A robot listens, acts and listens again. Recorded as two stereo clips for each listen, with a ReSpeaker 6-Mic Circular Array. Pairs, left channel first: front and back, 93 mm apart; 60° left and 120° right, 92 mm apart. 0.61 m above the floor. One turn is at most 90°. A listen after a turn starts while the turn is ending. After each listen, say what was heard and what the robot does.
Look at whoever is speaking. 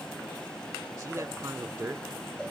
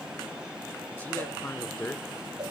The man speaking: 115° left. Turn 90° left.
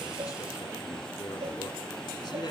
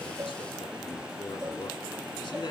The man speaking is now 20° left. Turn 20° left.
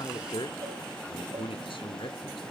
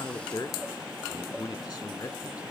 Found it: a man speaking, straight ahead, 1 to 2 m away.